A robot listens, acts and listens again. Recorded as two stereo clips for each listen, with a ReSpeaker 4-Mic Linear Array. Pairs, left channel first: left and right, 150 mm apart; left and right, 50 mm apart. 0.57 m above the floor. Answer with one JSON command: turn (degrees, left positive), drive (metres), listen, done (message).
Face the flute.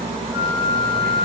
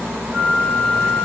{"turn": -20}
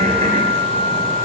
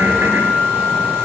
{"turn": -140}
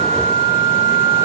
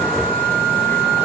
{"turn": 40}
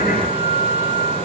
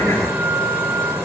{"done": "Found it: a flute, straight ahead."}